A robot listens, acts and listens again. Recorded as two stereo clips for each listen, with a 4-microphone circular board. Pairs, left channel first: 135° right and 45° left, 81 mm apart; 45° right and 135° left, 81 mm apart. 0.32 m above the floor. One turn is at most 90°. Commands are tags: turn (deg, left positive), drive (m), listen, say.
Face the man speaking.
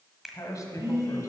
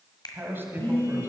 <turn deg="-90"/>
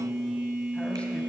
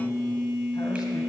<turn deg="-80"/>
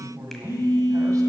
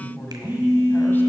<turn deg="15"/>
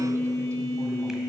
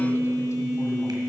<listen/>
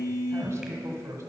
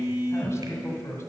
<say>Found it: a man speaking, straight ahead, 1 to 2 m away.</say>